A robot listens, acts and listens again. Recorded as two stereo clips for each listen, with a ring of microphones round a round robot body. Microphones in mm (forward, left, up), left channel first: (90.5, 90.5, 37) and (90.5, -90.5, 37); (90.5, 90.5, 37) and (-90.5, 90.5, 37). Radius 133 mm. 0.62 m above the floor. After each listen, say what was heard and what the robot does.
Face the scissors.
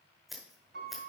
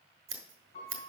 The scissors: straight behind. Turn 180° left.
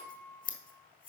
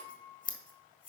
The scissors is now 45° left. Turn 45° left.
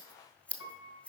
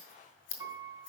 Facing the scissors, 1 to 2 m away.